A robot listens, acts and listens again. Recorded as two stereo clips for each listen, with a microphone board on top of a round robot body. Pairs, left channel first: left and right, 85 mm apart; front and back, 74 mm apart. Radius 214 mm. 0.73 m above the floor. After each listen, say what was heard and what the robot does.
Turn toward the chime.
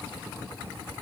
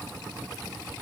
Keep listening.
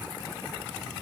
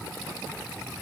Keep listening.
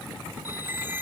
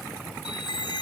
The chime: 20° right. Turn 20° right.
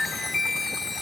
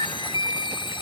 Facing the chime.